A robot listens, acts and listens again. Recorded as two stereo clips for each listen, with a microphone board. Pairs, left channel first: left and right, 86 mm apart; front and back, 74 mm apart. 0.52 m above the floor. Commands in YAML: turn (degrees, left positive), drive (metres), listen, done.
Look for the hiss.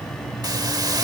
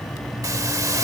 turn: -135
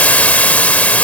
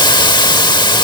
turn: 15
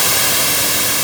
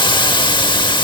done: "Facing the hiss."